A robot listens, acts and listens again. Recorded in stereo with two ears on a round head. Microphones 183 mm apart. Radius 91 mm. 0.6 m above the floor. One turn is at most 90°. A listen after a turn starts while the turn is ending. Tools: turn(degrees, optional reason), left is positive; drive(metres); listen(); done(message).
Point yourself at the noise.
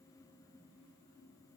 listen()
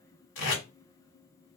turn(degrees=65, reason="The tape being pulled: about 65° left or 115° left.")
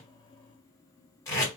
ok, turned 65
turn(degrees=15, reason="So it is at 15° left.")
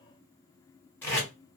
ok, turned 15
turn(degrees=10, reason="The tape being pulled is now 10° left.")
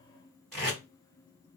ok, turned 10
done("Facing the tape being pulled, 1 to 2 m away.")